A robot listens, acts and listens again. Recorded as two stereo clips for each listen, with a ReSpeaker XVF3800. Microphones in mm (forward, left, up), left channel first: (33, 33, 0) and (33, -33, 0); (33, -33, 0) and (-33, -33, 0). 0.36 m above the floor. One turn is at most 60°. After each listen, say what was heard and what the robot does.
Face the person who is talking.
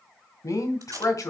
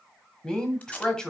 The woman speaking: 80° left. Turn 60° left.
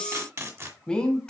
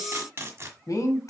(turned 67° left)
The woman speaking is now 15° left. Turn 15° left.
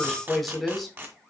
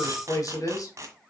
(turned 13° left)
Facing the woman speaking.